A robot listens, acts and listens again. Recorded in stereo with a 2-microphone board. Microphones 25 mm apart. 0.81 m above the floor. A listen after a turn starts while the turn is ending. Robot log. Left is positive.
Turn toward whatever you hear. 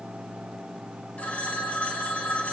note: The phone ringing: about 75° left or 105° left.
cmd yaw +75
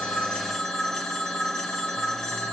note: So it is at 30° left.
cmd yaw +30
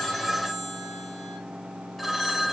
end: Facing the phone ringing.